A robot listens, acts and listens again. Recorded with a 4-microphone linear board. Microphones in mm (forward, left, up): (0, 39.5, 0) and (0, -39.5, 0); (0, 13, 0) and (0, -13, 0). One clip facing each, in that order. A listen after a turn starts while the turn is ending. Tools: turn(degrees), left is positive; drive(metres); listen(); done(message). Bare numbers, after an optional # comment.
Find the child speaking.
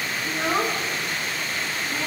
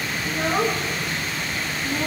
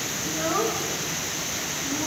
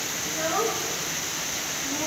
turn(30)
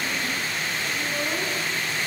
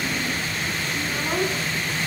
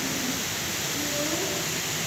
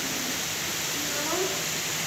listen()
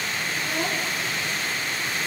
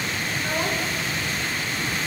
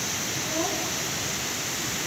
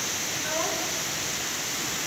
listen()
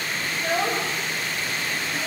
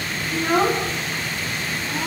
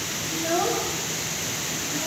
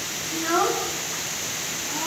# So it is at 55° right.
turn(-55)
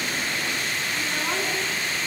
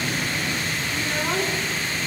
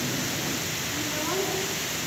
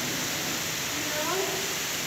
done("Found it: a child speaking, straight ahead.")